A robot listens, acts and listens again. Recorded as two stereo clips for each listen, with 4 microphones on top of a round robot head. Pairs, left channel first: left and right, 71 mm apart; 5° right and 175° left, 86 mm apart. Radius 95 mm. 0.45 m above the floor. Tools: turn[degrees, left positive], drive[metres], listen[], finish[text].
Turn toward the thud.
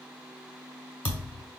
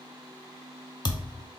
Thought: The thud: 25° left.
Action: turn[25]
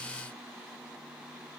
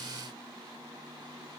Action: finish[Facing where the thud came from. I can't hear it now.]